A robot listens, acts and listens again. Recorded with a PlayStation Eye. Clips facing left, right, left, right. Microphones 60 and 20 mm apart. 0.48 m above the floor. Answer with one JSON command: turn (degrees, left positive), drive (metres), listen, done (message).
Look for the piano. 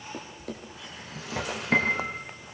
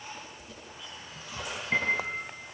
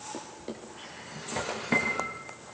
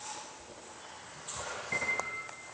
{"turn": 30}
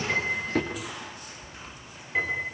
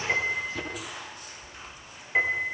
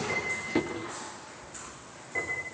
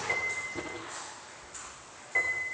{"turn": -20}
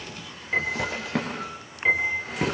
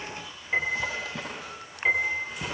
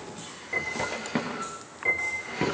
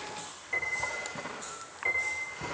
{"done": "Facing the piano, over 4 m away."}